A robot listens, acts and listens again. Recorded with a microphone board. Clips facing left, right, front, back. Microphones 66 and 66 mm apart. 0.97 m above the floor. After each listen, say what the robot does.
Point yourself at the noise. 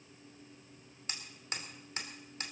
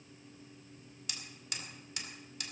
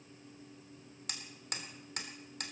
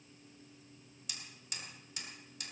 Turn 35° left.
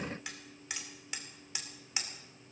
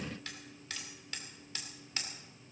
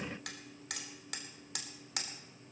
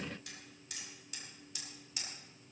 Turn 15° left.
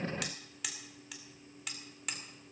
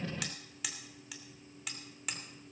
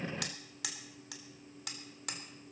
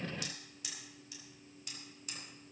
Found it: hammering, straight ahead.